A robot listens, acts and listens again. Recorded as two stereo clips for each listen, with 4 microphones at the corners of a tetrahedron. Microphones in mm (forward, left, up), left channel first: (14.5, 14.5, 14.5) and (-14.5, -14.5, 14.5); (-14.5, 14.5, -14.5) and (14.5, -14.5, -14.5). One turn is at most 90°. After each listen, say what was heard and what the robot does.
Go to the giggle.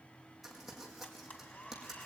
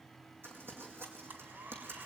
Keep listening.
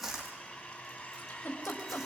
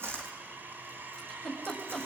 The giggle: 50° left. Turn 50° left.
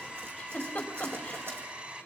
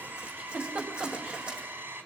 The giggle is now 15° right. Turn 15° right.
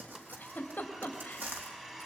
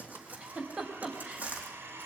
Drive 1.0 m forward.
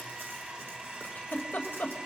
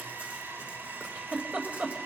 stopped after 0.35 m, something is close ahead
Something is in my way. I am facing the giggle but have not reached it.